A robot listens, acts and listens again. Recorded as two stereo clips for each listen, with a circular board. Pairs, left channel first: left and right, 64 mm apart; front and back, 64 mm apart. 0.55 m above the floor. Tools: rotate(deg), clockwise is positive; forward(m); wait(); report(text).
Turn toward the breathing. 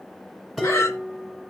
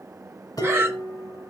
rotate(-125)
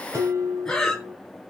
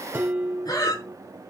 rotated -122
report("Facing the breathing.")